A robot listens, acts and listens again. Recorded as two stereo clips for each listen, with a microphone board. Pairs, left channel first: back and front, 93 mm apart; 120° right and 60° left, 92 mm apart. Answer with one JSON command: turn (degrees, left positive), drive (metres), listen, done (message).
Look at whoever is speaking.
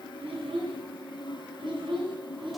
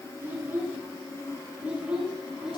{"turn": -25}
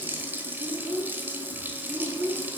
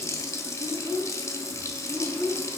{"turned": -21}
{"turn": -20}
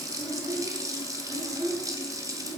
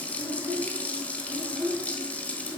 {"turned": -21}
{"turn": -10}
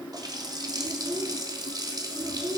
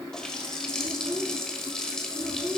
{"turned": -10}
{"done": "Facing the child speaking."}